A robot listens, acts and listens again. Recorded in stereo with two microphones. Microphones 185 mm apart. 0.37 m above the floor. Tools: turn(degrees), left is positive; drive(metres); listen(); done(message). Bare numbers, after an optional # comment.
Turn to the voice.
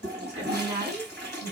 # The woman speaking: about 35° right or 145° right.
turn(-35)
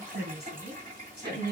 # So it is at 110° right.
turn(-110)
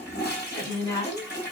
# The woman speaking is now 30° left.
turn(30)
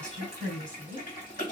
done("Found it: a woman speaking, straight ahead, 2 to 4 m away.")